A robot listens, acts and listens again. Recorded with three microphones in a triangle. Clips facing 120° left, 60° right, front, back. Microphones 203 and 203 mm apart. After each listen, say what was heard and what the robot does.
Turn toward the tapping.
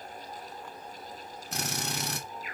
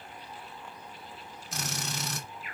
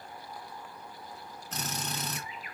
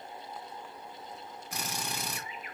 Keep listening.
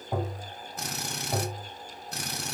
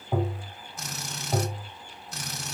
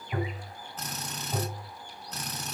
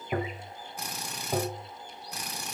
The tapping: 145° right. Turn 145° right.
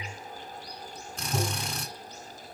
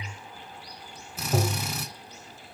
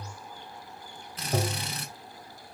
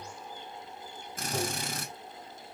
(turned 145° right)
The tapping is now 35° right. Turn 35° right.
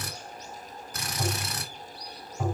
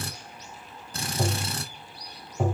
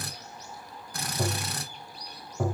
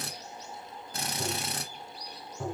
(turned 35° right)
The tapping is now 10° right. Turn 10° right.
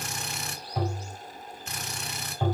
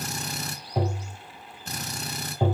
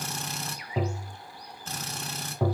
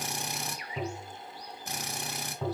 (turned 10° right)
Found it: tapping, straight ahead.